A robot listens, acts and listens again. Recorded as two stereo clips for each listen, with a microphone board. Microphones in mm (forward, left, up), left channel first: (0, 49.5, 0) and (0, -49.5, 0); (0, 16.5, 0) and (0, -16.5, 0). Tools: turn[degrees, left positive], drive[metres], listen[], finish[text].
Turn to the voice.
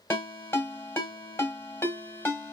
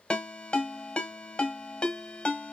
Action: listen[]
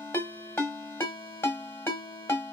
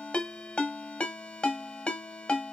Action: listen[]
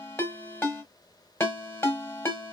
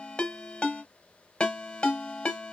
Action: finish[I can't make out anyone speaking, only a ringtone.]